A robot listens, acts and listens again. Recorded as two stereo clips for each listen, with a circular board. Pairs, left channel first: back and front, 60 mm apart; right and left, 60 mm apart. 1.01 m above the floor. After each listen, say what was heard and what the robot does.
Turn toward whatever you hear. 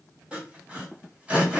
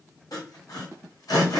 The sawing: 70° right. Turn 70° right.
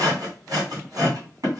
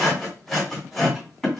Facing the sawing, 1 to 2 m away.